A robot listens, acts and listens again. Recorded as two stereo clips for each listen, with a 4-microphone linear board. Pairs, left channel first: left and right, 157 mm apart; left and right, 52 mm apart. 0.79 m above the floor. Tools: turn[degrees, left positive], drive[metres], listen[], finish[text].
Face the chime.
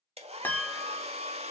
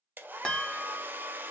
Action: turn[30]
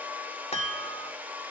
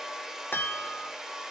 Thought: So it is at 140° left.
Action: turn[140]
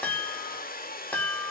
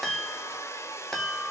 Thought: The chime is now 10° left.
Action: turn[10]
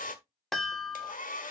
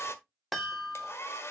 Action: finish[Facing the chime, 2 to 4 m away.]